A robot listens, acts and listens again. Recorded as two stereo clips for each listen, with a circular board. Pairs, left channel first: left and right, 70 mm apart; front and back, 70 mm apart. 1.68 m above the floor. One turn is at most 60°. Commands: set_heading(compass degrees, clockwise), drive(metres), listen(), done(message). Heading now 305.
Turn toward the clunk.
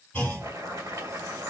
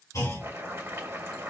set_heading(275)
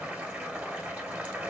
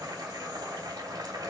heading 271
done("Facing where the clunk came from. I can't hear it now.")